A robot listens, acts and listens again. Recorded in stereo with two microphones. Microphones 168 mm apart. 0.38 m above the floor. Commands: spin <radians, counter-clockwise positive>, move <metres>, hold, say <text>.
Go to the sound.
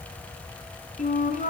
spin 0.87
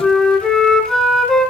move 1.0
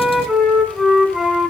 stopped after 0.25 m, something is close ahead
say Something is in my way. I am facing the flute but have not reached it.